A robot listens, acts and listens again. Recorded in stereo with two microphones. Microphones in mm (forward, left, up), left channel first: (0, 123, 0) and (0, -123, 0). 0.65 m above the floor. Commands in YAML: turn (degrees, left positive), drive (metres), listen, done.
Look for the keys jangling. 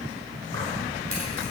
turn: -60
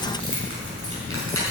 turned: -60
turn: -70
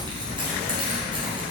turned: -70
turn: -25
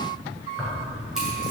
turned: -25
done: "Facing the keys jangling, over 4 m away."